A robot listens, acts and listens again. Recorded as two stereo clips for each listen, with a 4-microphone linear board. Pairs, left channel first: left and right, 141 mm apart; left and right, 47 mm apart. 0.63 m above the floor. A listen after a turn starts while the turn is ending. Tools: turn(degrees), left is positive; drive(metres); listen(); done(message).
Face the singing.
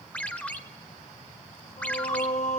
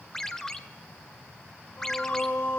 turn(degrees=55)
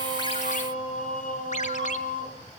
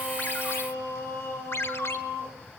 turn(degrees=80)
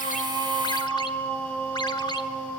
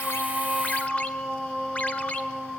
turn(degrees=15)
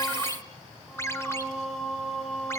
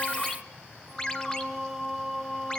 done("Facing the singing, 2 to 4 m away.")